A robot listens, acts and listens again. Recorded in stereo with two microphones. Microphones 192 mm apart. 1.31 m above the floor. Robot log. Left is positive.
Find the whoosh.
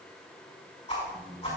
note: The whoosh: about 35° left or 145° left.
cmd yaw +35
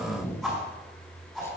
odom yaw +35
end: Facing the whoosh.